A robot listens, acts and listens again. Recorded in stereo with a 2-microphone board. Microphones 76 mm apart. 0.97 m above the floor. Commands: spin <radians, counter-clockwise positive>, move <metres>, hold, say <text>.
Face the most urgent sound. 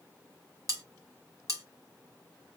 hold
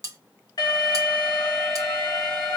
spin 1.05
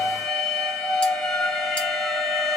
say Found it: an alarm, straight ahead.